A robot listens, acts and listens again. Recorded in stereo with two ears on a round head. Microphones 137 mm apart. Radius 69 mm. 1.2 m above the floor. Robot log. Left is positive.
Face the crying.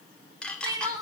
note: The crying: about 25° right or 155° right.
cmd yaw -25
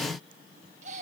cmd idle
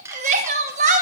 note: So it is at 130° right.
cmd yaw -130
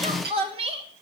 note: The crying is now 40° right.
cmd yaw -40
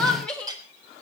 end: Found it: crying, straight ahead.